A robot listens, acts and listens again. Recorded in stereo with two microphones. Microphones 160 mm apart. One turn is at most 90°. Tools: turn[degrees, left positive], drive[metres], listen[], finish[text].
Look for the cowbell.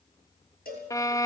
Thought: The cowbell: about 70° left or 110° left.
Action: turn[70]
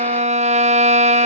Action: listen[]
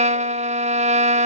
Action: listen[]
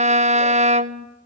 Action: finish[I heard a cowbell, but can't make it out now. It was about straight ahead or 40° left.]